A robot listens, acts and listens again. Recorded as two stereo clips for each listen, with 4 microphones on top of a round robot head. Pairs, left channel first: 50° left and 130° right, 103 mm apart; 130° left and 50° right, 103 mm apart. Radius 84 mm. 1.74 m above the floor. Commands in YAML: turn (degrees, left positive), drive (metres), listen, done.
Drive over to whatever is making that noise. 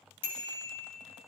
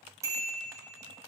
turn: 10
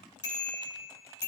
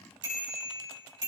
drive: 1.0
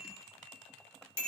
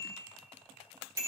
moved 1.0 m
turn: 10
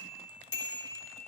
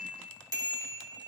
drive: 1.0
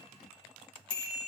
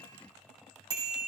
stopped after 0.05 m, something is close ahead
done: "Blocked. The bicycle bell is further on, straight ahead."